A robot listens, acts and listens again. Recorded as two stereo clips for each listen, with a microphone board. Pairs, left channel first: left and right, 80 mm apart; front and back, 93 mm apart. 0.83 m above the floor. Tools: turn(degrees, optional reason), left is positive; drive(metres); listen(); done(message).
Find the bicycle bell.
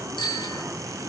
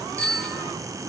turn(degrees=75, reason="The bicycle bell: 75° left.")
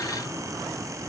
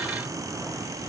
listen()
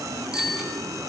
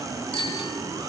turn(degrees=-10, reason="The bicycle bell is now 10° right.")
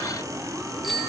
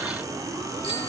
done("Found it: a bicycle bell, straight ahead, over 4 m away.")